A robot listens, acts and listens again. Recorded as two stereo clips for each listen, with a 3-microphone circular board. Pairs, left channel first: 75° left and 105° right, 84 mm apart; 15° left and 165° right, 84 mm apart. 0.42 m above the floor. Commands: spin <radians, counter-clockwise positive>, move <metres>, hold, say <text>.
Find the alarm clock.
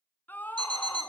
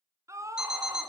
spin -1.48
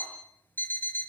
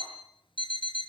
spin 0.17
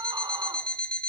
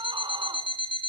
say Found it: an alarm clock, straight ahead.